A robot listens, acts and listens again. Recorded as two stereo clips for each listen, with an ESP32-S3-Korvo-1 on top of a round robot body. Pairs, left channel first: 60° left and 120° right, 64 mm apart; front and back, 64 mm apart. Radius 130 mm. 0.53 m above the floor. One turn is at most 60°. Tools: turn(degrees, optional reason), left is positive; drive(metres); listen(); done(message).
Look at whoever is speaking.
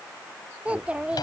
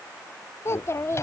turn(degrees=-45, reason="The child speaking: 45° right.")
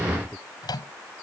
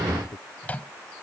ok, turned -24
turn(degrees=-25, reason="The child speaking is now 25° right.")
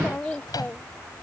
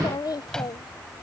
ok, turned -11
turn(degrees=-10, reason="The child speaking is now 10° right.")
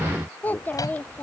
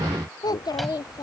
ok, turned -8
done("Facing the child speaking.")